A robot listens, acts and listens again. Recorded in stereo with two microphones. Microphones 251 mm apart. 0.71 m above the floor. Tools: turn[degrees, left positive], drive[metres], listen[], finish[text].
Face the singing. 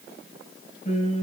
Thought: The singing: about 25° left or 155° left.
Action: turn[25]
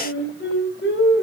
Thought: So it is at 135° left.
Action: turn[135]
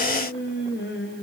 Thought: The singing is now 50° left.
Action: turn[50]
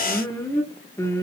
Thought: The singing is now 10° left.
Action: turn[10]
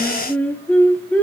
Action: finish[Found it: singing, straight ahead.]